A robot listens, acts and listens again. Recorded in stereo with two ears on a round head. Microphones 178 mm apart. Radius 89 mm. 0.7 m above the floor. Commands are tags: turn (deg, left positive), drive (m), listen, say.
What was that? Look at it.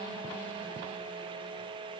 <listen/>
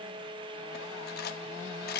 <turn deg="50"/>
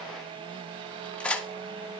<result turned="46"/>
<say>Found it: cutlery clinking, straight ahead, under 1 m away.</say>